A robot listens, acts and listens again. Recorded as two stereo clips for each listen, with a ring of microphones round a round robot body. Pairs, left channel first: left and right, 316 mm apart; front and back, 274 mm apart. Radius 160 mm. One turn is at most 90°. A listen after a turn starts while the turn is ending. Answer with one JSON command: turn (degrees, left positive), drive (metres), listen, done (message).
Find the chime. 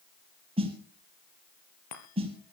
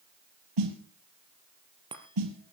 {"turn": 90}
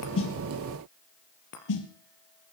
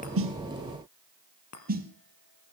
{"turn": 35}
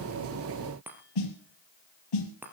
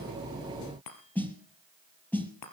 {"done": "Facing the chime."}